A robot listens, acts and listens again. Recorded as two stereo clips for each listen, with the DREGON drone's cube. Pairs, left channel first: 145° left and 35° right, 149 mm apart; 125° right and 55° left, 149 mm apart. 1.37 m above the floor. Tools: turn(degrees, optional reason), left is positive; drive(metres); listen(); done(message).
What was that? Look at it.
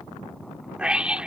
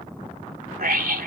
turn(degrees=50, reason="The scream: 50° left.")
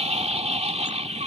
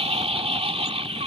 turn(degrees=10, reason="The scream is now 10° left.")
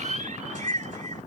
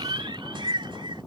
done("Found it: a scream, straight ahead.")